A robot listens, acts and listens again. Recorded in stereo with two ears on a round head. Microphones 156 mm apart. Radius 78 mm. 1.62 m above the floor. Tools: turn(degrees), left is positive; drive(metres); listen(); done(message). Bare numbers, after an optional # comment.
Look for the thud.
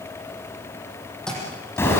turn(30)
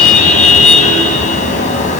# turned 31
listen()
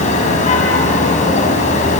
done("I heard a thud, but can't make it out now. It was about 25° right or 145° left.")